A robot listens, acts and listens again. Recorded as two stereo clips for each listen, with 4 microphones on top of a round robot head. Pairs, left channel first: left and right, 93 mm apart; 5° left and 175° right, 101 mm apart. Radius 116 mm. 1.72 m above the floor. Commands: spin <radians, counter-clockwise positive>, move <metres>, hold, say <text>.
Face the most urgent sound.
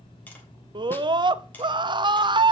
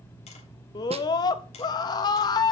spin -0.87
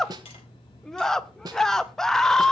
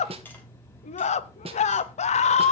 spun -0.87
say Facing the scream, under 1 m away.